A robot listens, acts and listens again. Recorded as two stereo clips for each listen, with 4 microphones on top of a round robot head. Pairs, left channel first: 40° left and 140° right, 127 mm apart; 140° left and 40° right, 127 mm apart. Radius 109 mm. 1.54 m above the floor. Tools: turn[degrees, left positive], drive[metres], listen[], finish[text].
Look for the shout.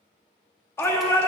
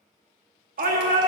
Thought: The shout: 30° right.
Action: turn[-30]
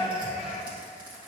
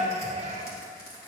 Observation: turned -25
Action: finish[Found it: a shout, straight ahead, 1 to 2 m away.]